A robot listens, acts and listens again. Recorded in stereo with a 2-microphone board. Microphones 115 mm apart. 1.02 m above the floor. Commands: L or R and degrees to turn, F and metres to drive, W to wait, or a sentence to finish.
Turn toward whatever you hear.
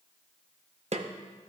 R75
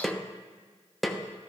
Facing the snare drum.